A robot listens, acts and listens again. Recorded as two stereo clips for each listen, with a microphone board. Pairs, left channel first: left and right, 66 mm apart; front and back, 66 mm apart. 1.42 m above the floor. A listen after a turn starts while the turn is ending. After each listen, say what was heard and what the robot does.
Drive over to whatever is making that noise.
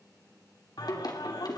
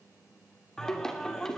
The singing: 80° left. Turn 80° left.
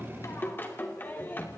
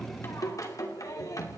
The singing is now 30° left. Turn 30° left.
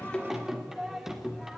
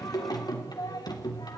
Drive 1.0 m forward.
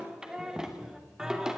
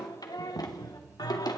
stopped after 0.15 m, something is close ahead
The singing is now 10° right. Turn 10° right.
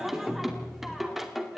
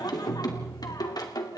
Blocked. The singing is further on, straight ahead.